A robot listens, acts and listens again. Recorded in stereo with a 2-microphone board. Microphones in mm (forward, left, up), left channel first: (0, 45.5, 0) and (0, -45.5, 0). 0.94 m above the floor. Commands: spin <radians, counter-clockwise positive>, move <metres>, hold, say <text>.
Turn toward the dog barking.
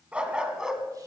spin -0.52
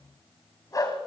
spin 0.70
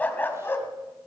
spin 0.44
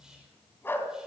spin 0.44
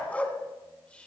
spin 0.26
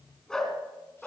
say Facing the dog barking, 2 to 4 m away.